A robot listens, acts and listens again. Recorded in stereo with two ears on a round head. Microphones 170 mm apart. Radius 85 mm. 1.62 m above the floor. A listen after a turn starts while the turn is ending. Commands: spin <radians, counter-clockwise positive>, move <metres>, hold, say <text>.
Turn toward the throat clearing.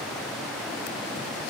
hold
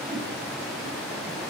hold
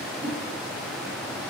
say I can't make out throat clearing.